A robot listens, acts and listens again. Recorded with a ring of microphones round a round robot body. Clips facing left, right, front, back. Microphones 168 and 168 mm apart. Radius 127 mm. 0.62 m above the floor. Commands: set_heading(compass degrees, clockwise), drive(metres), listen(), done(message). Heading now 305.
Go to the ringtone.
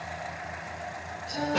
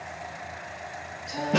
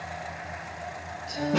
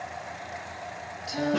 listen()
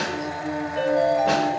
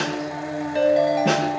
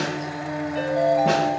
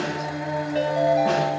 set_heading(70)
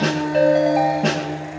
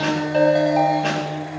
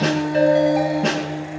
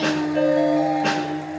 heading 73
listen()
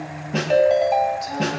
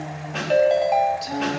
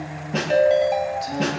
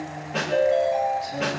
drive(1.0)
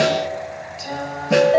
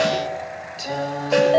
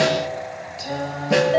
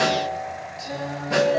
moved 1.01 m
set_heading(63)
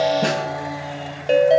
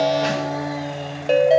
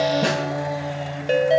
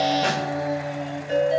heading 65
drive(1.0)
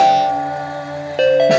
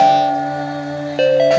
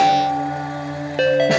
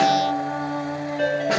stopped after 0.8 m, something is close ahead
done("I am next to the ringtone.")